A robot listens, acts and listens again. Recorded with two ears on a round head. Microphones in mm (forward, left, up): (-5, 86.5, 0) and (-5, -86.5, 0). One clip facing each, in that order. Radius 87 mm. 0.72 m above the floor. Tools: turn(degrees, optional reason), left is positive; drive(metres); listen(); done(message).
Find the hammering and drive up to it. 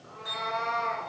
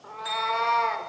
listen()
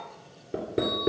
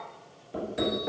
turn(degrees=65, reason="The hammering: about 65° left or 115° left.")
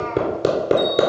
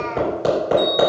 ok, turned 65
turn(degrees=50, reason="So it is at 50° left.")
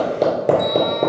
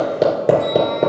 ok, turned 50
drive(metres=1.0)
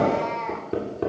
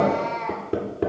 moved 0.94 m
drive(metres=1.0)
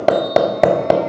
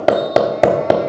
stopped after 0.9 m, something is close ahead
done("Arrived at the hammering, straight ahead.")